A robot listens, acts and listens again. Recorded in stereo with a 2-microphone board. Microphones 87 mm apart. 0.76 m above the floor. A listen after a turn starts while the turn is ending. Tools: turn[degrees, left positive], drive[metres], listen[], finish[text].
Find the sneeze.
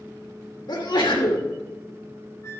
Thought: The sneeze: about 65° left or 115° left.
Action: turn[65]
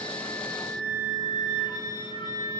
Action: listen[]
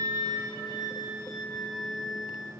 Action: finish[I heard a sneeze, but can't make it out now. It was about straight ahead or 50° left.]